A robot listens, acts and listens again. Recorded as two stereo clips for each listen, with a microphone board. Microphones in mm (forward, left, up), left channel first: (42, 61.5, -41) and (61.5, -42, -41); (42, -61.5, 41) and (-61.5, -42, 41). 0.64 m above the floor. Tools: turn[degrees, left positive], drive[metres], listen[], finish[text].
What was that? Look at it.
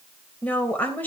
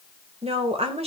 Thought: The woman speaking: 175° left.
Action: turn[175]
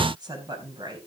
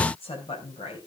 Thought: The woman speaking is now 35° right.
Action: turn[-35]
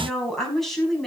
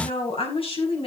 Thought: The woman speaking is now 15° left.
Action: turn[15]
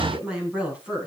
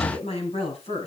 Action: finish[Facing the woman speaking.]